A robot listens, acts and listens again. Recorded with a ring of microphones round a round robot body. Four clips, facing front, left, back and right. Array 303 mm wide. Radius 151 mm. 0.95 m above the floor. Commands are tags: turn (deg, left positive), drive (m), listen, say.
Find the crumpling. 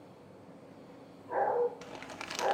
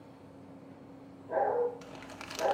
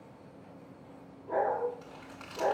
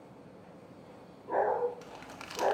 <say>Facing the crumpling.</say>